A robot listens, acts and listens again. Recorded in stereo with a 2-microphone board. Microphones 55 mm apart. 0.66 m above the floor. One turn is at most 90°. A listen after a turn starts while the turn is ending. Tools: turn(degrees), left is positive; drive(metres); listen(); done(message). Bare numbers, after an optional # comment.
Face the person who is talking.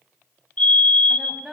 turn(-30)
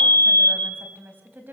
# So it is at 140° right.
turn(-90)
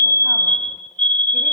# Nothing new. It was at 50° right.
turn(-50)
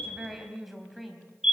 done("Found it: a woman speaking, straight ahead, 2 to 4 m away.")